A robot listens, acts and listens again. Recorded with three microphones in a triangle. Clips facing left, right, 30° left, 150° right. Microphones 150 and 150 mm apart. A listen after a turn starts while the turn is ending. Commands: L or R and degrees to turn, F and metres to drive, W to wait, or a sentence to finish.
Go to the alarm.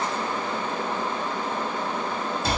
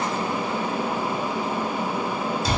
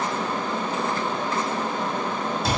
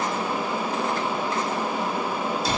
W
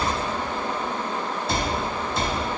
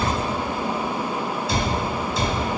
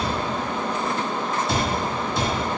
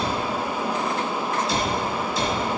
W
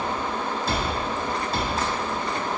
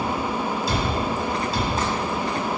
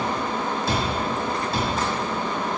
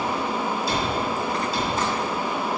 I can't make out an alarm, only a cupboard door.